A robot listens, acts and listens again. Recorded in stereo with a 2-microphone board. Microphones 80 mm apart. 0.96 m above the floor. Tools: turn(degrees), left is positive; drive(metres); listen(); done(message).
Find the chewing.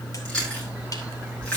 turn(degrees=30)
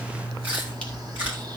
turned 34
turn(degrees=-20)
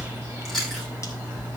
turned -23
done("Found it: chewing, straight ahead.")